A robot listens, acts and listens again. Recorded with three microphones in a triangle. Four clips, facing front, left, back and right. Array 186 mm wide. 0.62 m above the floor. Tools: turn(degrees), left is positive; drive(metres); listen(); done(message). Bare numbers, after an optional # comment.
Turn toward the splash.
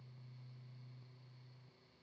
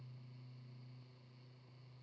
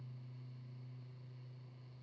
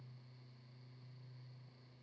listen()
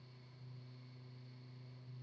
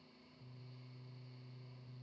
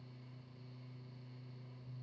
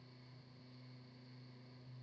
listen()
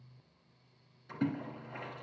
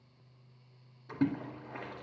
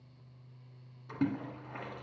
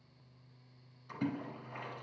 # The splash: 115° left.
turn(115)
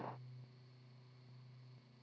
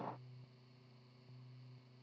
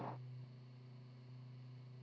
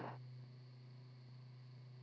done("I heard a splash from this way, but can't make it out now.")